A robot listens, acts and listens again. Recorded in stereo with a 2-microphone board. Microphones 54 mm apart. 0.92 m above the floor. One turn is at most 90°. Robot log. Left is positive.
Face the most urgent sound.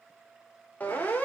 note: The siren: about 30° left or 150° left.
cmd yaw +30
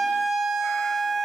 end: Found it: a siren, straight ahead.